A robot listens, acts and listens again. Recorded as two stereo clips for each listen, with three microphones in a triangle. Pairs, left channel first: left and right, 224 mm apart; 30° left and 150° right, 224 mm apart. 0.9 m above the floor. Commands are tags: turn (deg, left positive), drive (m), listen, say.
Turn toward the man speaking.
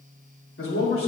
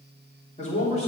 <turn deg="90"/>
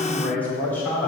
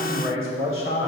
<turn deg="10"/>
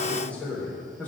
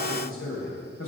<turn deg="10"/>
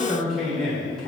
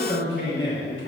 <say>Found it: a man speaking, straight ahead.</say>